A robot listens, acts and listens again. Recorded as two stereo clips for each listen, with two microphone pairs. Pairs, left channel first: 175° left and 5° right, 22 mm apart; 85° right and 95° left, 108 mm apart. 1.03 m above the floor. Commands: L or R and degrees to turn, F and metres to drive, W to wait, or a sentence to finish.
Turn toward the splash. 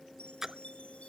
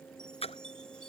R75
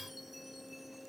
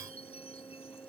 I heard a splash from this way, but can't make it out now.